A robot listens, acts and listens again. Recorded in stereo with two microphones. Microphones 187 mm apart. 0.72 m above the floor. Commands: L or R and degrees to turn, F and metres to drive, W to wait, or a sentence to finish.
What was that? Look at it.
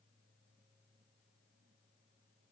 W
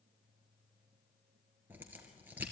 R30
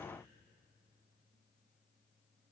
W
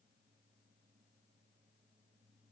I heard a crack, but can't make it out now. It was about 20° left or 140° right.